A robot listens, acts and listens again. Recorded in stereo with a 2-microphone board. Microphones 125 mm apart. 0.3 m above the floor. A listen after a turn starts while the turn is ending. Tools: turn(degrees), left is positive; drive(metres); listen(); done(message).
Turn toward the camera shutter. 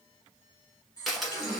turn(degrees=30)
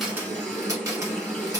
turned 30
turn(degrees=-30)
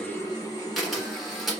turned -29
done("Facing the camera shutter, 1 to 2 m away.")